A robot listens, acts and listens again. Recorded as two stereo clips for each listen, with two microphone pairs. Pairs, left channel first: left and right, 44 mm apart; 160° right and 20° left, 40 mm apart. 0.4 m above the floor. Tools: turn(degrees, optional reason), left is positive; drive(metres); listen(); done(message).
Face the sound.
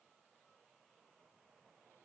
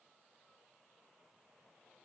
listen()
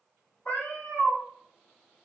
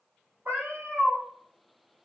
turn(degrees=50, reason="The cat meowing: 50° left.")
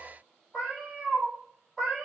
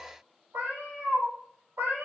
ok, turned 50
done("Facing the cat meowing.")